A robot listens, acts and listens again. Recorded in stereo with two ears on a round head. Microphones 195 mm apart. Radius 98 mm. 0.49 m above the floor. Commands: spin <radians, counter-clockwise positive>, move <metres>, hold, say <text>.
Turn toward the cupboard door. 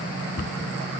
spin 0.70
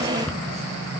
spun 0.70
say Found it: a cupboard door, straight ahead.